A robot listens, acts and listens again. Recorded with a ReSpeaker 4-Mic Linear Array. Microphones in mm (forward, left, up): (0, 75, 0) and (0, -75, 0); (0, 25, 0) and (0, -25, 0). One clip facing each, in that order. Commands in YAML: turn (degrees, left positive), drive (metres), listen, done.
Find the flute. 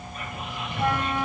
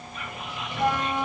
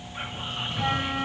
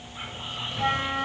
turn: 30
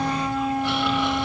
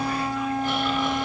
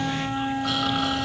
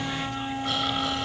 turn: 140
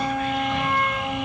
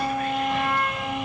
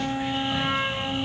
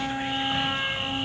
done: "Facing the flute."